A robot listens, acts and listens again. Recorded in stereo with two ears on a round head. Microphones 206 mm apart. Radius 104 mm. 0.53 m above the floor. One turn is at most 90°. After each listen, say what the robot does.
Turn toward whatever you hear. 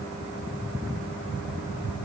Keep listening.
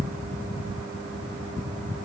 Keep listening.
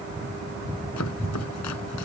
Turn 90° left.
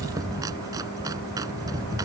Turn 15° right.
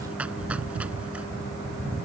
Keep listening.
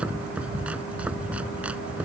Found it: chopping, straight ahead.